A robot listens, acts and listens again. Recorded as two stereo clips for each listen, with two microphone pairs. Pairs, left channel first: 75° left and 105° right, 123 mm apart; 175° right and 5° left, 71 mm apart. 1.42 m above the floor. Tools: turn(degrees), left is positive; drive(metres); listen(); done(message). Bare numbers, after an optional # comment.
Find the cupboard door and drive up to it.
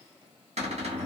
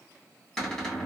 # The cupboard door: 90° right.
turn(-90)
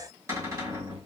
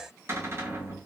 # The cupboard door is now 40° right.
turn(-40)
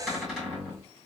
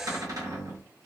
# The cupboard door is now 15° right.
turn(-15)
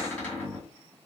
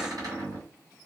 drive(1.0)
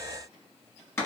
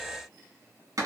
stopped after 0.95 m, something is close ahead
# The cupboard door is now 15° left.
turn(15)
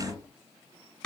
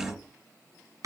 done("Arrived at the cupboard door, straight ahead.")